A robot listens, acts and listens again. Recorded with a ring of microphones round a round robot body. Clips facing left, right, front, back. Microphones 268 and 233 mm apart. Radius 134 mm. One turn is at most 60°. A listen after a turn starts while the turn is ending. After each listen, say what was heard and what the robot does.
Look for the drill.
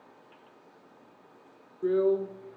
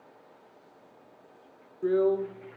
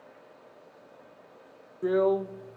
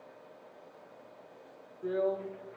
Facing the drill, under 1 m away.